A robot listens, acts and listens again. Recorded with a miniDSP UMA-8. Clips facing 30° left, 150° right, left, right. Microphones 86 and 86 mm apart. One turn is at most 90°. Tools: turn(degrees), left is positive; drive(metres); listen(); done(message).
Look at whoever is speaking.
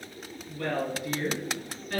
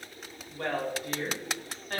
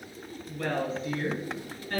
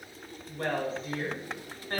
turn(degrees=-90)
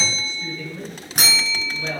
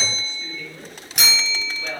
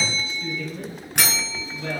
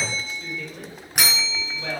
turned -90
turn(degrees=-50)
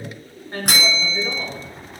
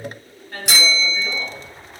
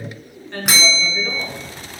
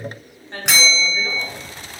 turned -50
turn(degrees=-30)
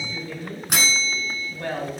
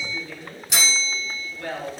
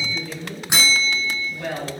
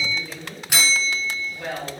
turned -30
turn(degrees=-10)
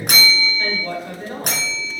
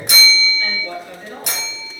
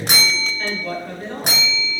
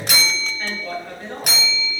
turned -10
done("Facing the woman speaking.")